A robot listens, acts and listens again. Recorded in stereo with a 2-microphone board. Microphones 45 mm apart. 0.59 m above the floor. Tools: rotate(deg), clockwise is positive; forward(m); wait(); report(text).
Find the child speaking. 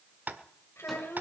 rotate(-90)
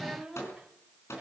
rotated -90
report("Found it: a child speaking, straight ahead, 1 to 2 m away.")